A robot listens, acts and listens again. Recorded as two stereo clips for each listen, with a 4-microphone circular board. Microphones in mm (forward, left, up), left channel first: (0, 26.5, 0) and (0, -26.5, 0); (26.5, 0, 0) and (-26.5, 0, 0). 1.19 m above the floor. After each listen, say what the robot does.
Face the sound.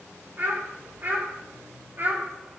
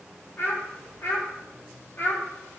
Turn 45° right.
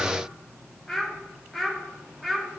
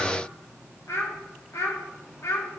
Facing the child speaking, 1 to 2 m away.